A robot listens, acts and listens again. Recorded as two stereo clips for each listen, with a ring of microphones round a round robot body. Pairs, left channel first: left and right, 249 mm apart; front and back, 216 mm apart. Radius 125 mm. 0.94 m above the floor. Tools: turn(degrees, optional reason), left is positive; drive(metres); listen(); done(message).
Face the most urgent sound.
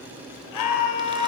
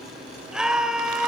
turn(degrees=95, reason="The scream: 95° left.")
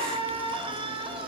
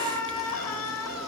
turn(degrees=-20, reason="The scream is now 20° right.")
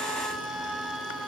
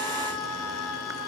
done("Found it: a scream, straight ahead.")